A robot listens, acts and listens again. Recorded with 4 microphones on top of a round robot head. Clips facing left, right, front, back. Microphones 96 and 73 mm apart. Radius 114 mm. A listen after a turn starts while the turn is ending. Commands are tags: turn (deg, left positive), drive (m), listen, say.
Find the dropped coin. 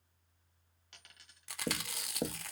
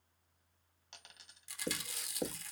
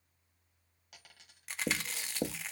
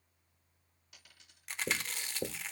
<turn deg="-30"/>
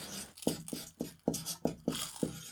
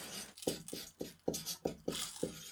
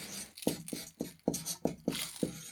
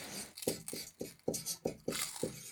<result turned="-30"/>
<say>Facing where the dropped coin came from. I can't hear it now.</say>